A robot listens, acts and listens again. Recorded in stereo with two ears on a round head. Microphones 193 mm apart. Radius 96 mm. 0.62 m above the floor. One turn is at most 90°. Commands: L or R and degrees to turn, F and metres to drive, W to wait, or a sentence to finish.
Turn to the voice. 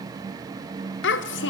L60
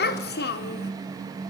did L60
L55
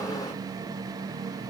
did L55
W
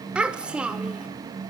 Found it: a child speaking, straight ahead.